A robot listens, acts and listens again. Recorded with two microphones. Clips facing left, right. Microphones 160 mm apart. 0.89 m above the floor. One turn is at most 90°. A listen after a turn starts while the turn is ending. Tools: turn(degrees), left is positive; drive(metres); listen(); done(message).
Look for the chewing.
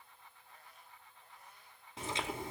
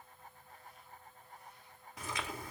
turn(degrees=25)
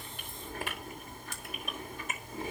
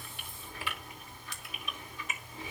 turn(degrees=90)
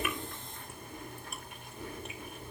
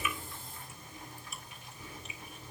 turn(degrees=60)
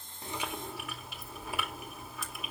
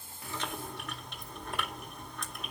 done("Found it: chewing, straight ahead.")